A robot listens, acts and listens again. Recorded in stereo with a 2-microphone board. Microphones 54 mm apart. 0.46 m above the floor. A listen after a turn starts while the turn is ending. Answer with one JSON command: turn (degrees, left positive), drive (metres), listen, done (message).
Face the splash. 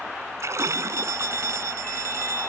{"turn": -60}
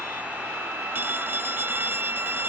{"listen": true}
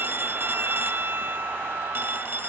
{"done": "I heard a splash, but can't make it out now. It was about straight ahead or 60° right."}